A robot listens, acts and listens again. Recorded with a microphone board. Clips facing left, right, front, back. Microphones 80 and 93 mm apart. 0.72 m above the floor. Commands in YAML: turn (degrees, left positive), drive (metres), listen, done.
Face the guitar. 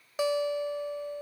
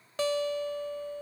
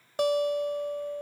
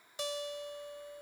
turn: 15
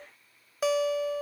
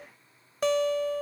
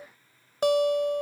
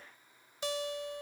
done: "Found it: a guitar, straight ahead."